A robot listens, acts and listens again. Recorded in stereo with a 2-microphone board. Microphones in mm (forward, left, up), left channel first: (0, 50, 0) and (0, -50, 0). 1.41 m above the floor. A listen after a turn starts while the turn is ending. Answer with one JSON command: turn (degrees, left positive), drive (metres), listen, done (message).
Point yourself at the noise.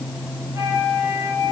{"turn": -30}
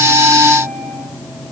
{"listen": true}
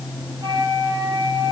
{"turn": -125}
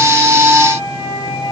{"turn": 35}
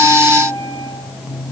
{"listen": true}
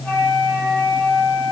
{"turn": 10}
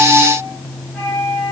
{"done": "Found it: a flute, straight ahead, over 4 m away."}